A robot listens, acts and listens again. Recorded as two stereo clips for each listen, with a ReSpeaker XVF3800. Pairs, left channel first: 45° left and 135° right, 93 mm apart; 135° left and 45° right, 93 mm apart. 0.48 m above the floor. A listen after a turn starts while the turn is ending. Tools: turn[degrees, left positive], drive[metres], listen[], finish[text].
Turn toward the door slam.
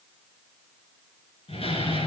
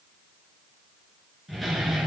Thought: The door slam: 45° left.
Action: turn[45]
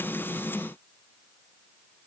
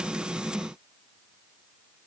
Action: finish[I heard a door slam from this way, but can't make it out now.]